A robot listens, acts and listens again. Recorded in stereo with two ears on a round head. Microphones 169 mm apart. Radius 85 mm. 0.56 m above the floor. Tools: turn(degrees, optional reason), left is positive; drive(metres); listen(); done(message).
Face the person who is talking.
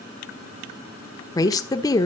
turn(degrees=20, reason="The woman speaking: about 20° left or 160° left.")
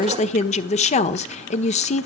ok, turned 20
turn(degrees=140, reason="So it is at 140° left.")
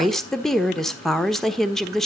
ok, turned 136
done("Facing the woman speaking.")